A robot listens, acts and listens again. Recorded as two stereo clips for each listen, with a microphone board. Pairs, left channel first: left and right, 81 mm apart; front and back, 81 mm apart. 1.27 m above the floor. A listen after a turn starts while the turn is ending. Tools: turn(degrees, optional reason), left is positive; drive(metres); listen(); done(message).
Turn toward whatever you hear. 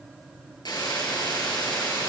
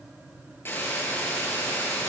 turn(degrees=60, reason="The hiss: 60° left.")
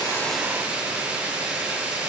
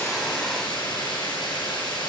turn(degrees=-20, reason="The hiss is now 20° right.")
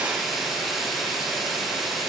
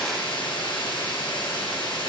done("Facing the hiss.")